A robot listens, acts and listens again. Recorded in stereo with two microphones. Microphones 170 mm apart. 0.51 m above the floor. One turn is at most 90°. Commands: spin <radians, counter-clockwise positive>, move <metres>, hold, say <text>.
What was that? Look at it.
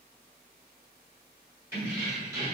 spin -0.35
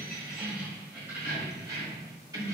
spin -0.35
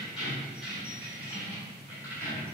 spin -0.52
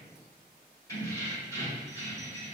spin 0.35
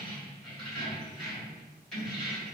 say Found it: keys jangling, straight ahead.